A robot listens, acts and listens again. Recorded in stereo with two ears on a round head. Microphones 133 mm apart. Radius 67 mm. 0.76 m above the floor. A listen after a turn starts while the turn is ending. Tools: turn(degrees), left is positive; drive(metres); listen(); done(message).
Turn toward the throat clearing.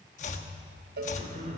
turn(degrees=-50)
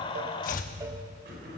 turn(degrees=-75)
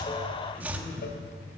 turn(degrees=10)
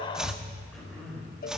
done("Found it: throat clearing, straight ahead.")